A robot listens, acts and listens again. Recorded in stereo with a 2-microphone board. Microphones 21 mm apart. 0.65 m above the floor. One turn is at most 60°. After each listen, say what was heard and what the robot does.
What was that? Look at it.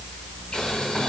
The boiling: about 45° left or 135° left. Turn 45° left.
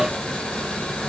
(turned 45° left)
So it is at 90° left. Turn 60° left.
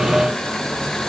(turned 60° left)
The boiling is now 35° left. Turn 35° left.
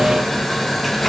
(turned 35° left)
Facing the boiling.